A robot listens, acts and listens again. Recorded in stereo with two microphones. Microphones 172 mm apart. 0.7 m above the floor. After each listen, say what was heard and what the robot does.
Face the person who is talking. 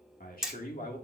The man speaking: about 55° left or 125° left. Turn 55° left.
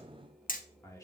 So it is at 20° left. Turn 20° left.
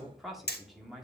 Found it: a man speaking, straight ahead.